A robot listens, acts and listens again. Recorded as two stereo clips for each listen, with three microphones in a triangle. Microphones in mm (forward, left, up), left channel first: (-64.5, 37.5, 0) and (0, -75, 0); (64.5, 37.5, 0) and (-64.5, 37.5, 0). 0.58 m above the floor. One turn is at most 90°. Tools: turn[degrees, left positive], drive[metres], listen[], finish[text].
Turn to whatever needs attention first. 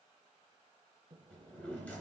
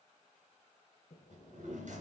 Action: listen[]
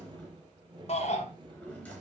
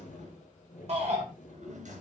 Thought: The shout: 150° left.
Action: turn[90]
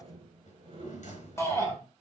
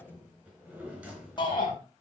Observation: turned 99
Thought: The shout is now 50° left.
Action: turn[50]
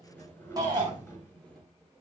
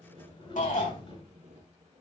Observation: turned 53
Action: finish[Facing the shout, 2 to 4 m away.]